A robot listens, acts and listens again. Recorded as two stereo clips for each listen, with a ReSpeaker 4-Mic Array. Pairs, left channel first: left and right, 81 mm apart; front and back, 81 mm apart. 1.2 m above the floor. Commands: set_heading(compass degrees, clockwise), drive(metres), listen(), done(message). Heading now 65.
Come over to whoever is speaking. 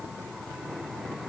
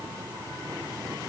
listen()
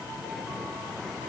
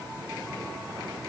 listen()
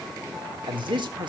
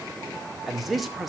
set_heading(155)
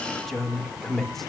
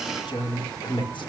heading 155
drive(1.0)
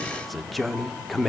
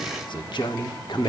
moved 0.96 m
drive(1.0)
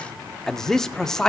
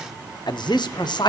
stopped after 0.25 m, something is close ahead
done("I am next to the man speaking.")